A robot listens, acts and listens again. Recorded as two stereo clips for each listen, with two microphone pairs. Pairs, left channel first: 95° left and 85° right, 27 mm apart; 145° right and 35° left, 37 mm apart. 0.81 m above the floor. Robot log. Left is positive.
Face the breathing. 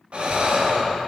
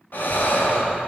note: The breathing: 115° right.
cmd yaw -115
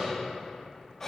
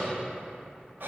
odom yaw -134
note: The breathing is now 20° left.
cmd yaw +20
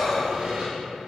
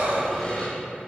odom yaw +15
end: Found it: breathing, straight ahead, under 1 m away.